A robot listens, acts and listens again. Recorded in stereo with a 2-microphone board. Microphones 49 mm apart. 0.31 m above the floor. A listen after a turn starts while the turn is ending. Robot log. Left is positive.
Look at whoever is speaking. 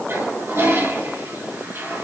cmd idle
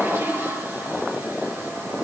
cmd idle
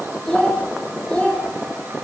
cmd yaw +30
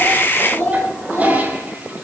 note: So it is at 140° left.
cmd yaw +140
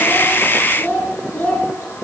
note: The child speaking is now 40° left.
cmd yaw +40
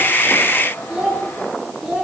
note: The child speaking is now 10° right.
cmd yaw -10
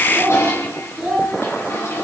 end: Facing the child speaking, over 4 m away.